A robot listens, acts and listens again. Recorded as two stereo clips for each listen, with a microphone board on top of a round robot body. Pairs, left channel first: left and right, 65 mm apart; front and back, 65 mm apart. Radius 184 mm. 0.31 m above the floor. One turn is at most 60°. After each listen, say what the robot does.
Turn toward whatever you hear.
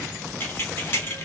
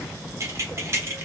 Turn 60° left.
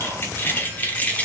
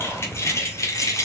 Turn 25° left.
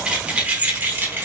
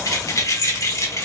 Turn 40° right.
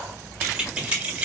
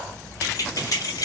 Turn 20° right.
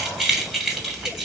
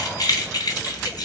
Facing the keys jangling.